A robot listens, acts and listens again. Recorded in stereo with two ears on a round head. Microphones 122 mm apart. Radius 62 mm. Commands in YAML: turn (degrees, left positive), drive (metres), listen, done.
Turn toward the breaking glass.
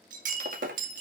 turn: -60
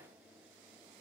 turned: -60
listen: true
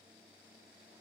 done: "I heard breaking glass, but can't make it out now. It was about straight ahead or 60° right."